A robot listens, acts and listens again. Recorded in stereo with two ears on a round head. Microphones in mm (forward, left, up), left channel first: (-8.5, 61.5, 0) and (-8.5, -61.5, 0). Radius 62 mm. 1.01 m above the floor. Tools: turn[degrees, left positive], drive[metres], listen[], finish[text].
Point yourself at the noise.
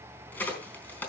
Action: turn[30]
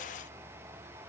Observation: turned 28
Action: listen[]
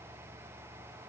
Action: finish[I heard a crack, but can't make it out now. It was about 15° right or 140° left.]